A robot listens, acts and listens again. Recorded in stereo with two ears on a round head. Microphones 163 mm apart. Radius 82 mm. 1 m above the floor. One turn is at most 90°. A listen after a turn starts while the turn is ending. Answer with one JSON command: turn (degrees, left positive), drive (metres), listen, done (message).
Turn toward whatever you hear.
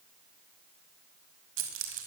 {"turn": -75}
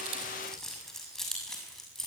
{"done": "Found it: keys jangling, straight ahead."}